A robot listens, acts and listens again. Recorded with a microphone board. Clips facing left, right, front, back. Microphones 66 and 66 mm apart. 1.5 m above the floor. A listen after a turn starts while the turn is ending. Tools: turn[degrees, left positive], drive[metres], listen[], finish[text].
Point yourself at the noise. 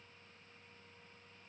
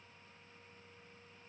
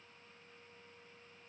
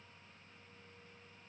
Action: listen[]
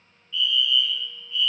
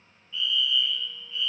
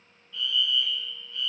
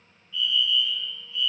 Thought: The fire alarm: 30° right.
Action: turn[-30]
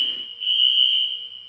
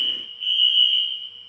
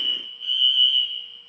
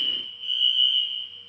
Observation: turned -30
Action: finish[Facing the fire alarm, 2 to 4 m away.]